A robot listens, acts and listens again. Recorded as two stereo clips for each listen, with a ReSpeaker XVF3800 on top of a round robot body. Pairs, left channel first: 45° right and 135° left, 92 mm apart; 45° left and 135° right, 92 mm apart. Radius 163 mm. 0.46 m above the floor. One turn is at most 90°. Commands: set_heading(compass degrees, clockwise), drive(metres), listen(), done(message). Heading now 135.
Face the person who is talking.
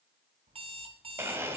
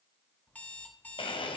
listen()
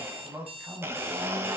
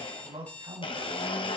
set_heading(225)
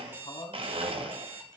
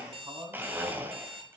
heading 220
set_heading(305)
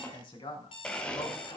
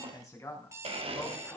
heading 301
set_heading(316)
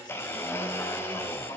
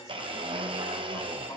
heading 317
listen()
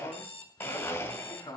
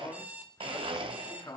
done("Found it: a man speaking, straight ahead.")